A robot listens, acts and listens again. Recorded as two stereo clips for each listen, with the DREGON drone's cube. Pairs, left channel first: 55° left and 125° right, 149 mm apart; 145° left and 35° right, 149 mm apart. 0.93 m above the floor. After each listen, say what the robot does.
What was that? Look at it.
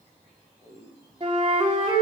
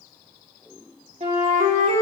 Turn 70° right.
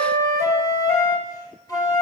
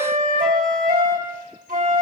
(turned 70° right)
Turn 10° right.
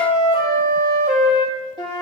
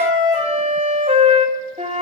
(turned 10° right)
Found it: a flute, straight ahead.